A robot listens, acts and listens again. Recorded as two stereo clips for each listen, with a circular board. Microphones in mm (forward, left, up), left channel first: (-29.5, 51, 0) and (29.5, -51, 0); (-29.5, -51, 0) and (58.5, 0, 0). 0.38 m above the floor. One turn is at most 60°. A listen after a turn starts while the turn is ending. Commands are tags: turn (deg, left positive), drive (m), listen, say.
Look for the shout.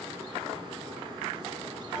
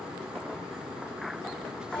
<listen/>
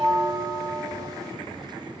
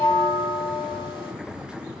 <listen/>
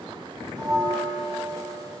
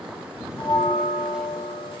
<say>I can't make out a shout, only a bell.</say>